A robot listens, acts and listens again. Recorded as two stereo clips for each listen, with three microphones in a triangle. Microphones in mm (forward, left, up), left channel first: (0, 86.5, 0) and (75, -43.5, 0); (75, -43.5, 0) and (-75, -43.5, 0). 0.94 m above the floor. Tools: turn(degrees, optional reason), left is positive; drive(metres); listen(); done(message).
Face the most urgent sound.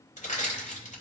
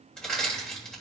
listen()
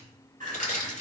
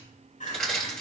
turn(degrees=-35, reason="The crying: 35° right.")
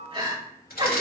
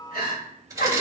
turn(degrees=-10, reason="The crying is now 10° right.")
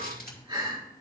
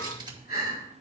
done("Facing the crying, over 4 m away.")